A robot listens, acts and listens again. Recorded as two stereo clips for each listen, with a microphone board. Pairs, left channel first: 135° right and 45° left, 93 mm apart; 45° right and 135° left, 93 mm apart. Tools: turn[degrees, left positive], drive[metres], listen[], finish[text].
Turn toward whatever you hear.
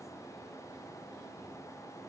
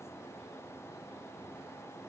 Action: listen[]
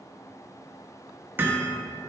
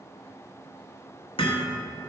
Thought: The hammering: 25° right.
Action: turn[-25]
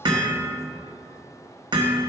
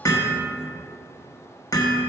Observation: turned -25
Thought: The hammering is now 10° left.
Action: turn[10]
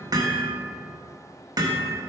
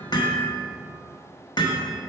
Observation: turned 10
Action: finish[Facing the hammering.]